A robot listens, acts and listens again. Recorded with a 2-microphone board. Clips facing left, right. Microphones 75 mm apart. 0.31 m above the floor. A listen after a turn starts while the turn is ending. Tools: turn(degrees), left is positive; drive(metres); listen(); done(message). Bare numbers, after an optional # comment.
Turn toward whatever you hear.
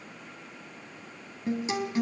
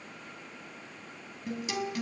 # The guitar: about 30° left or 150° left.
turn(30)
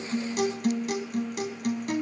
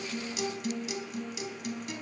# So it is at 115° left.
turn(115)
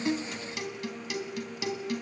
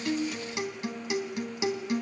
# The guitar is now 25° right.
turn(-25)
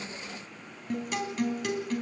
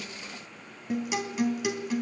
# The guitar is now 10° right.
turn(-10)
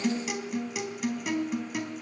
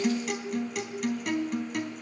done("Found it: a guitar, straight ahead.")